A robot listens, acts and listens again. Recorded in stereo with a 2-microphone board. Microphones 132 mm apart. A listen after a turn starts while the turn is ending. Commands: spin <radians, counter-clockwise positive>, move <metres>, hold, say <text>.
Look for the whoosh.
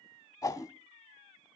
spin 0.44
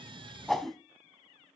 say Found it: a whoosh, straight ahead, under 1 m away.